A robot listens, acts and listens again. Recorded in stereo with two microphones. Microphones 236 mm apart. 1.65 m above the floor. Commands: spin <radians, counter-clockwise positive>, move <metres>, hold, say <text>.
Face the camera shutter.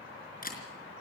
spin 0.61
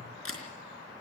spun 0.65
spin 1.83
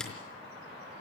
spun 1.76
hold
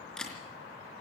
say Facing the camera shutter, over 4 m away.